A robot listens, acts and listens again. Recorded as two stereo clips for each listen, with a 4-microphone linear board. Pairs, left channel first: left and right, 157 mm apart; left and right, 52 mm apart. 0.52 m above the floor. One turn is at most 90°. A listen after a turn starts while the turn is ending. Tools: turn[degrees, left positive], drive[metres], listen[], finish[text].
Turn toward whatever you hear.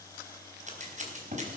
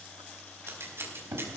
Thought: The scissors: about 50° right or 130° right.
Action: turn[-50]
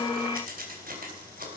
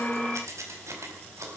Thought: So it is at 80° right.
Action: turn[-80]
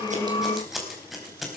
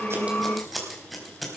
Action: finish[Facing the scissors.]